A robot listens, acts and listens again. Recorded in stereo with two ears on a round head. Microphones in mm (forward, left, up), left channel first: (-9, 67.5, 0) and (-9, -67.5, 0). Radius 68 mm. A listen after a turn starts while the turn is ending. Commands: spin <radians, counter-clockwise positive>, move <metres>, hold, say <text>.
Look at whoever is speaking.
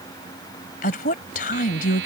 spin 1.05
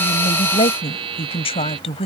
spin 0.79
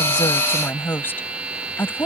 spin 0.26
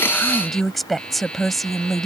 say Facing the woman speaking.